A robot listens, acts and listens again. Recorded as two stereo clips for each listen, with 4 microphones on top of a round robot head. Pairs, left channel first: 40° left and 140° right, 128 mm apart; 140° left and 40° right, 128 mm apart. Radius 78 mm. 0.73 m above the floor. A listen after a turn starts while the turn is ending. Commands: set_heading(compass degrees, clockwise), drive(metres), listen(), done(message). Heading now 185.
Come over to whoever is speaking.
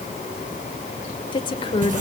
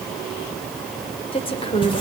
set_heading(95)
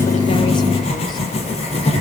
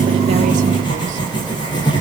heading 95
listen()
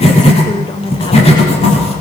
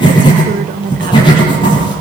set_heading(110)
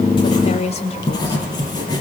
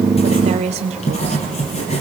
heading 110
drive(1.0)
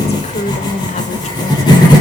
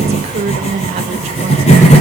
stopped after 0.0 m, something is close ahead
done("Something is in my way. I am facing the woman speaking but have not reached it.")